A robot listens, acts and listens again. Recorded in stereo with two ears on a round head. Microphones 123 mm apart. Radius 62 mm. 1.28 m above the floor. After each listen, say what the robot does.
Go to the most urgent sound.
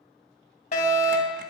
Turn 60° left.
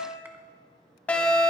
Turn 10° left.
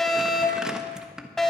Drive 1.0 m forward.
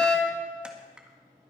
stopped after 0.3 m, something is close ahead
Turn 10° left.
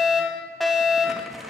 Something is in my way. I am facing the fire alarm but have not reached it.